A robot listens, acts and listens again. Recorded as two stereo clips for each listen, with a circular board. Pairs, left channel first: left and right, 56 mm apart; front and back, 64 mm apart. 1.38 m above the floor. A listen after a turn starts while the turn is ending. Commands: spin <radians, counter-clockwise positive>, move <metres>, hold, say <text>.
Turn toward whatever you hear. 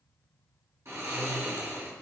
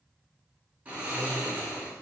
spin -2.01
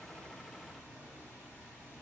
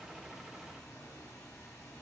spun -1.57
spin -0.35
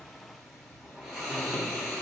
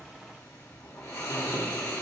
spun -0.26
say Found it: snoring, straight ahead, 2 to 4 m away.